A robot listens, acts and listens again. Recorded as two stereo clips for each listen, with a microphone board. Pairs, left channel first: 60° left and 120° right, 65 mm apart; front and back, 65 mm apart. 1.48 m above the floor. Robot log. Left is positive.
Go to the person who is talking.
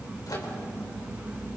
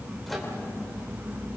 cmd idle
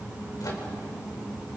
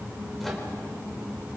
cmd idle
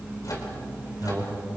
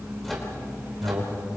note: The man speaking: 170° right.
cmd yaw -170
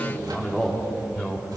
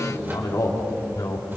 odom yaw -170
note: The man speaking is now 20° right.
cmd yaw -20
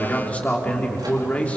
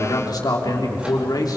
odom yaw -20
note: The man speaking is now 10° right.
cmd yaw -10
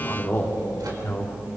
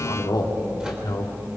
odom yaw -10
cmd fwd 1.0
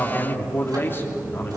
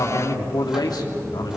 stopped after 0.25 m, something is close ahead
end: Blocked. The man speaking is further on, straight ahead.